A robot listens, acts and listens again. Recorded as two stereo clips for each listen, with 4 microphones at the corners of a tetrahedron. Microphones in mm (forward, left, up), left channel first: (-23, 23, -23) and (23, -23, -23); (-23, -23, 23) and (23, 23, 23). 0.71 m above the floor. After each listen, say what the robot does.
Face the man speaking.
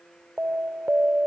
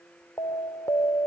Keep listening.
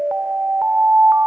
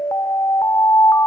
Keep listening.
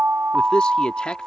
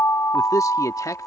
Turn 150° right.
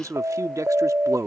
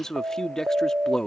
Turn 55° right.
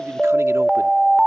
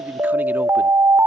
Keep listening.
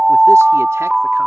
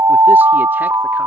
Keep listening.
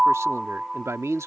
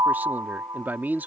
Turn 10° right.
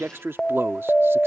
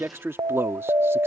Found it: a man speaking, straight ahead.